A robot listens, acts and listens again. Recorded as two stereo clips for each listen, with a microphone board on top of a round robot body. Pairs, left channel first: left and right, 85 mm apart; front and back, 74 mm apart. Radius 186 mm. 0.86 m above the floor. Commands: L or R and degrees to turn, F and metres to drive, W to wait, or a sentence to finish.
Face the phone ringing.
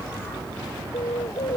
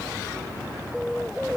W
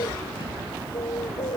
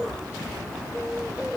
W
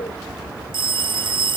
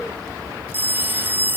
R115
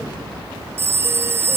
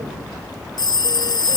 R25
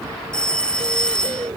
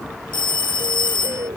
L10
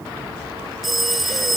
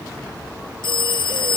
Facing the phone ringing.